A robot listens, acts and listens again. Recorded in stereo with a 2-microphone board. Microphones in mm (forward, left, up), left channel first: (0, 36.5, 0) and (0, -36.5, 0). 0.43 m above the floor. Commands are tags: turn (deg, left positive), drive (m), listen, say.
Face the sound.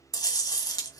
<turn deg="65"/>
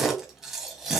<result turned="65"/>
<say>Facing the chewing, 1 to 2 m away.</say>